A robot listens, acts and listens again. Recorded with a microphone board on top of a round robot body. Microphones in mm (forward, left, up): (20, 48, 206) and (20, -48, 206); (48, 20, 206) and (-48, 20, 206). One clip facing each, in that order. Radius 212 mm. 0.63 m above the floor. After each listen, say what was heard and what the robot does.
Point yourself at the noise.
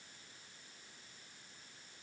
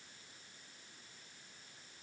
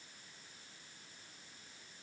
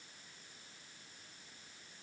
Keep listening.
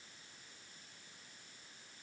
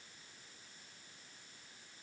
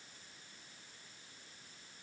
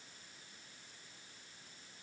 Keep listening.
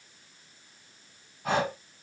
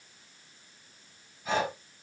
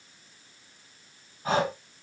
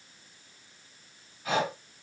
The breathing: 55° left. Turn 55° left.
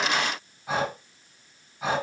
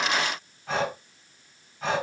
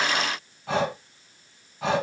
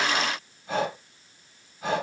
The breathing is now 10° left. Turn 10° left.
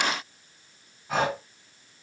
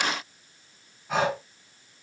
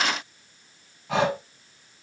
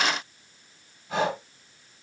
Found it: breathing, straight ahead, over 4 m away.